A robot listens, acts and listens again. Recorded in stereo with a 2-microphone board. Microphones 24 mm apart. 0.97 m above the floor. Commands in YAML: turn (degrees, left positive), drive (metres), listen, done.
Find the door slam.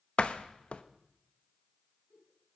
turn: 55
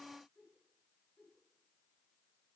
listen: true
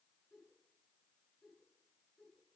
done: "I heard a door slam, but can't make it out now. It was about straight ahead or 70° left."